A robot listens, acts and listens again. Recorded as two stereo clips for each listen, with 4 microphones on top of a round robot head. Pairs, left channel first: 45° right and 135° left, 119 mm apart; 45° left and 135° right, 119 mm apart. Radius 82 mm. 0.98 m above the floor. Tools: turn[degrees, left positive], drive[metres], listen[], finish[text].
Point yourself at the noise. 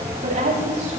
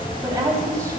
Thought: The woman speaking: 160° left.
Action: turn[160]
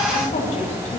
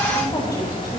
Thought: The woman speaking is now 15° right.
Action: turn[-15]
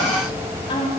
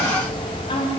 Action: finish[Facing the woman speaking.]